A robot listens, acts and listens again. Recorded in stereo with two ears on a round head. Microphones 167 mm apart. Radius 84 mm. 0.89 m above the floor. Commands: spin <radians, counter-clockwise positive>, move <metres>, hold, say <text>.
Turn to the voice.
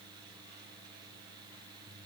hold
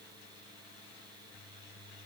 hold
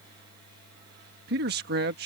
spin -0.96
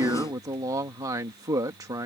spin -0.35
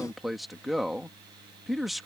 say Facing the man speaking.